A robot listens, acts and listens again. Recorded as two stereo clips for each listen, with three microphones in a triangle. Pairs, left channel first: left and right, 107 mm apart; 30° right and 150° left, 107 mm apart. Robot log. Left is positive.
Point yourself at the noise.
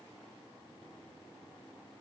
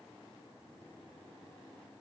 cmd idle
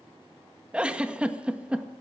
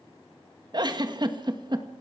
note: The giggle: 170° right.
cmd yaw -170
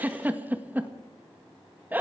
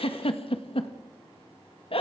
note: The giggle is now 20° right.
cmd yaw -20
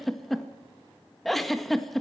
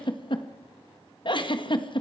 end: Found it: a giggle, straight ahead.